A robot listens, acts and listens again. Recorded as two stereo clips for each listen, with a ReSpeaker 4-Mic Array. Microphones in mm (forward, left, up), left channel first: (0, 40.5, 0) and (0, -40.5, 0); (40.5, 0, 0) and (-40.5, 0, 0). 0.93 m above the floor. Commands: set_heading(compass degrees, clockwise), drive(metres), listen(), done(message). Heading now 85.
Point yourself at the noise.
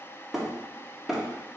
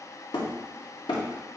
done("Facing the hammering.")